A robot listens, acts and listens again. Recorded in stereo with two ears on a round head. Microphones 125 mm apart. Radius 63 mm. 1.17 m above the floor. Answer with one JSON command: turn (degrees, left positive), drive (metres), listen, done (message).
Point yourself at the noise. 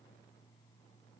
{"listen": true}
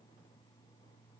{"listen": true}
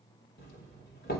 {"turn": 90}
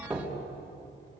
{"turn": -10}
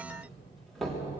{"done": "Facing the doorbell, 2 to 4 m away."}